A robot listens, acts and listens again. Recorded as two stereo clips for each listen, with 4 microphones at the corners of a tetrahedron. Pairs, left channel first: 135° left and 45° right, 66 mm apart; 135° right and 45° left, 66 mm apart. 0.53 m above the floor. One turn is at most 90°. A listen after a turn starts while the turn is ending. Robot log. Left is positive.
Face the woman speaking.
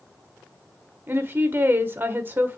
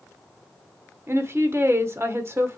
end: Facing the woman speaking, 1 to 2 m away.